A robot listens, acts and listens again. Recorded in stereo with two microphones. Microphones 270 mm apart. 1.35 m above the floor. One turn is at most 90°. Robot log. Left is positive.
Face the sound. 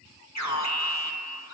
cmd yaw +90
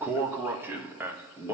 note: So it is at 10° right.
cmd yaw -10
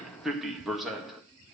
end: Found it: an alarm, straight ahead, 1 to 2 m away.